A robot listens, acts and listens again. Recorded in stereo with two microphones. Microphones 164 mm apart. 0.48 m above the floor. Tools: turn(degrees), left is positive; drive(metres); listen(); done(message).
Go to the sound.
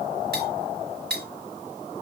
turn(degrees=-90)
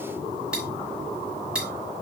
drive(metres=1.0)
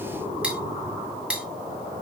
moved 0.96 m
drive(metres=1.0)
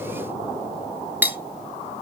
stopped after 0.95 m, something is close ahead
turn(degrees=-10)
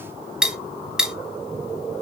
done("Arrived at the cutlery clinking, straight ahead.")